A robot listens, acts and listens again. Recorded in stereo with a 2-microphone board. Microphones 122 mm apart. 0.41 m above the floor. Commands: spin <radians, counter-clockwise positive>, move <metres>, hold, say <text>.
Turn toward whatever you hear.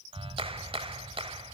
spin -0.79
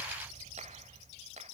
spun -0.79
spin -1.48
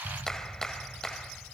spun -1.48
say Facing the clap.